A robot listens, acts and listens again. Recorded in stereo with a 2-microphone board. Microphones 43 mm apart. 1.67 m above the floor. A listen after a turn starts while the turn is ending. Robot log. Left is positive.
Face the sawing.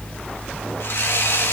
note: The sawing: about 70° left or 110° left.
cmd yaw +70
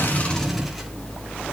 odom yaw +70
cmd idle
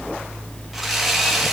end: Found it: sawing, straight ahead, 2 to 4 m away.